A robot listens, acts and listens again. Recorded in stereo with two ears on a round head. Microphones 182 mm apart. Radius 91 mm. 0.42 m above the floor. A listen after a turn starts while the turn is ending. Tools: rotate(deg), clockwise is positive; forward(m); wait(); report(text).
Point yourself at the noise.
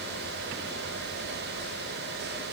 wait()
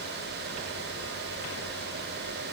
wait()
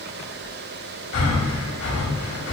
rotate(-65)
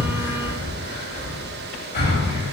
rotate(-45)
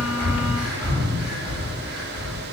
report("Found it: breathing, straight ahead.")